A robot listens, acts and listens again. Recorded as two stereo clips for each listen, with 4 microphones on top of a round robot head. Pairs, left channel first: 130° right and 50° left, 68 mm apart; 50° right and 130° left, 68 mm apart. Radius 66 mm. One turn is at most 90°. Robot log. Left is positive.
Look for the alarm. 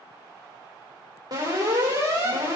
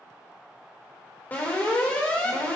note: The alarm: 15° left.
cmd yaw +15
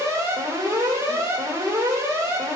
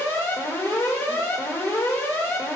end: Found it: an alarm, straight ahead, over 4 m away.